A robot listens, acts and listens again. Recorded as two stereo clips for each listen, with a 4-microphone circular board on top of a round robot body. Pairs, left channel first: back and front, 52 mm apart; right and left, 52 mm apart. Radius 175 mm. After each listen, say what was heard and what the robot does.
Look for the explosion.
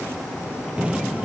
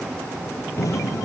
The explosion: 70° right. Turn 70° right.
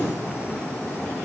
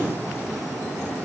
Facing where the explosion came from. I can't hear it now.